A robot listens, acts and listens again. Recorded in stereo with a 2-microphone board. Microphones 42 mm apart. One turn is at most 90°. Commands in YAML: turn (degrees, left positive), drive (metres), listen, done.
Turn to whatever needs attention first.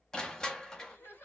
turn: 75
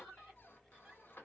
listen: true
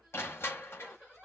done: "Facing the crying, 1 to 2 m away."